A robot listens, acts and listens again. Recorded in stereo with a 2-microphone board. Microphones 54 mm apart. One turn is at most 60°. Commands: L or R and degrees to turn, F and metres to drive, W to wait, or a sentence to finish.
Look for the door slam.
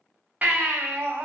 W
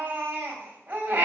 W
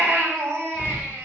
L40
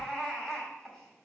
W
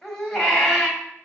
I heard a door slam, but can't make it out now. It was about straight ahead or 100° left.